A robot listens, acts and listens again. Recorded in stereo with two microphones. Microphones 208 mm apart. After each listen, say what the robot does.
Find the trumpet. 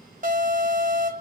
Keep listening.
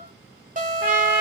Turn 30° right.
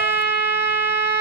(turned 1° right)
Turn 30° right.
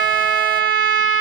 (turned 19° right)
Facing the trumpet.